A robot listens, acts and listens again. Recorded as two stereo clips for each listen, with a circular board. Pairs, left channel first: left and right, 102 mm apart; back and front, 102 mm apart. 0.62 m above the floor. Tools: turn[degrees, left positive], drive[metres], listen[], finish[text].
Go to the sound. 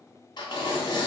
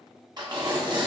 Thought: The tearing paper: 45° left.
Action: turn[45]
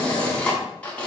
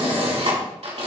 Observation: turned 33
Thought: The tearing paper is now 10° left.
Action: turn[10]
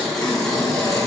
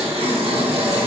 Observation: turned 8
Action: drive[1.0]
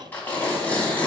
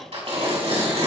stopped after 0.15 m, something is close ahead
Thought: The tearing paper is now 15° left.
Action: turn[15]
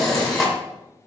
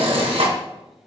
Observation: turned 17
Action: finish[Something is in my way. I am facing the tearing paper but have not reached it.]